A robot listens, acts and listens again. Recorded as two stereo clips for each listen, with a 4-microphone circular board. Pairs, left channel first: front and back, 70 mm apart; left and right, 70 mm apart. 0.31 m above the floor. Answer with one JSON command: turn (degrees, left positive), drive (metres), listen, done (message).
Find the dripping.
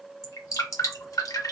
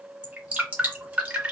{"turn": -20}
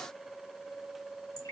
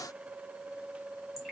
{"listen": true}
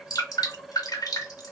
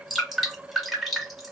{"done": "Facing the dripping."}